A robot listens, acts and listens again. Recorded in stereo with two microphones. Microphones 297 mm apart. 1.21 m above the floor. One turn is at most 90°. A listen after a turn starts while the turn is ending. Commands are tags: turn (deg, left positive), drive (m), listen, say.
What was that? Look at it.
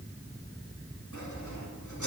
<turn deg="90"/>
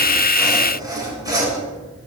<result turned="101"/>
<turn deg="-10"/>
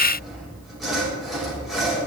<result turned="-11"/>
<say>Found it: sawing, straight ahead.</say>